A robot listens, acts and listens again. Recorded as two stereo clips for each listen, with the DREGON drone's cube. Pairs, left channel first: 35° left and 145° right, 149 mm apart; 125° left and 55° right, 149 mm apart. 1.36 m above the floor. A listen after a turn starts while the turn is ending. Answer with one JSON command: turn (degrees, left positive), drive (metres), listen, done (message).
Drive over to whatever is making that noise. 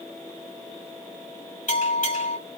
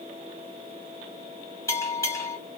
{"turn": 60}
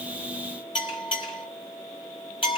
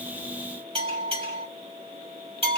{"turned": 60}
{"turn": -15}
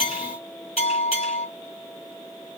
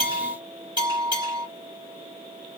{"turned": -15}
{"drive": 1.0}
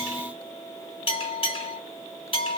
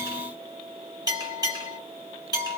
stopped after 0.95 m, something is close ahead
{"done": "Arrived at the bell, straight ahead."}